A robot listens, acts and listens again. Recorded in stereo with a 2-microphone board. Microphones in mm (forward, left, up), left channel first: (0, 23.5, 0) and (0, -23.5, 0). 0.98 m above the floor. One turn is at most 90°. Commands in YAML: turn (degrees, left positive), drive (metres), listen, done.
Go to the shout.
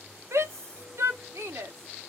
turn: -90
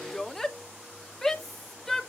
drive: 1.0
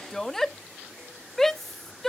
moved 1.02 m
drive: 1.0
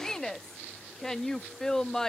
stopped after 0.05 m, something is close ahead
turn: 10
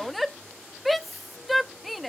done: "I am next to the shout."